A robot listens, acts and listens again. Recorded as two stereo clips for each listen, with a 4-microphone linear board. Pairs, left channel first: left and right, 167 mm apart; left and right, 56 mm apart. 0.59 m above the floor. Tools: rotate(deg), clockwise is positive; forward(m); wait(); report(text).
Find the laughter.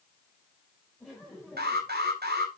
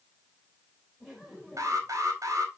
rotate(-30)
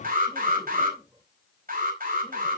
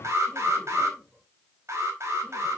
wait()
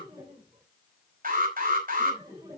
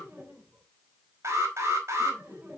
rotate(30)
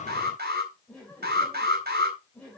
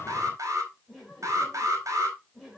report("Found it: laughter, straight ahead, 2 to 4 m away.")